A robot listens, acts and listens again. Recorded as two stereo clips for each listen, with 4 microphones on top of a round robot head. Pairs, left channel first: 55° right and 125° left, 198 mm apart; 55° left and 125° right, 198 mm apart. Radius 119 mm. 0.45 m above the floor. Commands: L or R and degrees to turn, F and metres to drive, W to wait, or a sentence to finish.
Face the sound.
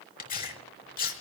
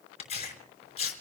Found it: tearing paper, straight ahead, over 4 m away.